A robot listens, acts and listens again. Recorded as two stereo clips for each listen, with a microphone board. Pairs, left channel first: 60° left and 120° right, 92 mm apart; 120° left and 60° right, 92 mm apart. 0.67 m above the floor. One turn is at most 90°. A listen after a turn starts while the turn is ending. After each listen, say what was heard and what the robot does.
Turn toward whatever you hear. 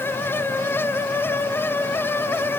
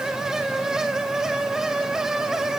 Keep listening.
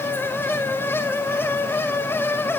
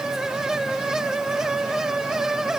Keep listening.
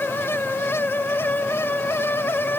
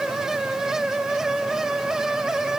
I can't make out anything to turn to.